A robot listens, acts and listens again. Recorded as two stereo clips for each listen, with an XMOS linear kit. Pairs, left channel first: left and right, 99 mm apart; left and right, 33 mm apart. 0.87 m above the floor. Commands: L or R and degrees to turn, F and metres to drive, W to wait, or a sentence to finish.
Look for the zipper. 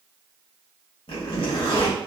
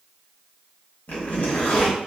L70
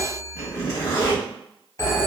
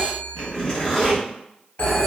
L30
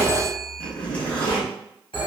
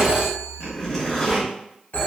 L15
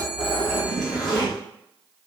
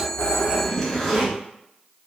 Found it: a zipper, straight ahead.